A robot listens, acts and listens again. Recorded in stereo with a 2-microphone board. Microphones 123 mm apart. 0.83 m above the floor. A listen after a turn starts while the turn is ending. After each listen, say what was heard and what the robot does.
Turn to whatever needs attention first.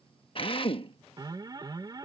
The alarm: about 35° right or 145° right. Turn 35° right.
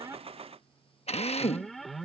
Facing the alarm.